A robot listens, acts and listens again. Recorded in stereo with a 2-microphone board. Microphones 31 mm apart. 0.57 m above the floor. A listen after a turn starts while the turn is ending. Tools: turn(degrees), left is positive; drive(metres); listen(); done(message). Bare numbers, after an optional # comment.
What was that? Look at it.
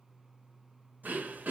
turn(-90)
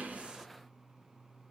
listen()
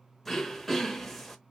# The throat clearing is now 10° left.
turn(10)
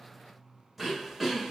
done("Found it: throat clearing, straight ahead, under 1 m away.")